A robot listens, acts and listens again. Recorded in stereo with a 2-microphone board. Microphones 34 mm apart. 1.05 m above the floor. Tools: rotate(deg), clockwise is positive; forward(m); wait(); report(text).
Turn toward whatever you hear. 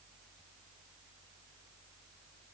wait()
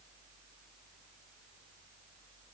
wait()
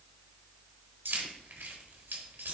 rotate(90)
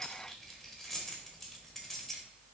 report("Found it: keys jangling, straight ahead, 1 to 2 m away.")